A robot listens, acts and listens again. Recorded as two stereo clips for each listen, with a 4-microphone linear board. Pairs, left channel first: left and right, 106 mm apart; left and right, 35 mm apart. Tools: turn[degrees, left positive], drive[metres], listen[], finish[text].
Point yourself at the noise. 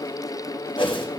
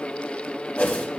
Thought: The whoosh: about 55° left or 125° left.
Action: turn[55]
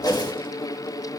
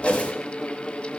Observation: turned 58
Thought: So it is at 50° left.
Action: turn[50]
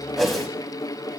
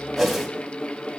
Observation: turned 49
Action: finish[Found it: a whoosh, straight ahead, 1 to 2 m away.]